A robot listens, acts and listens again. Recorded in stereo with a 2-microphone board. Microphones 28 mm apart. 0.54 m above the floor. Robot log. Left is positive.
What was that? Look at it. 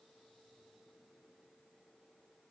cmd idle
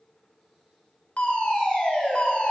note: The fire alarm: about 50° left or 130° left.
cmd yaw +50
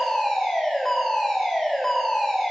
note: So it is at 15° left.
cmd yaw +15
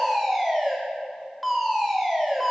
end: Facing the fire alarm, 2 to 4 m away.